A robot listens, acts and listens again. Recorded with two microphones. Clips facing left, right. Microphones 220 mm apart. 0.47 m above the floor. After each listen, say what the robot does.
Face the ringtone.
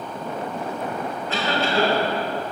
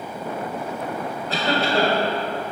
Keep listening.
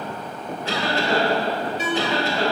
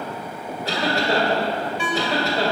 Turn 40° left.
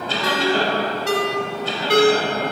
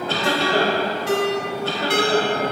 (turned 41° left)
Turn 95° left.
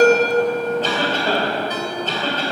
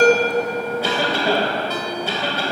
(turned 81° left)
Turn 15° left.
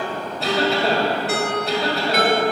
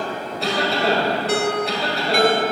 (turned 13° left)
Facing the ringtone, 1 to 2 m away.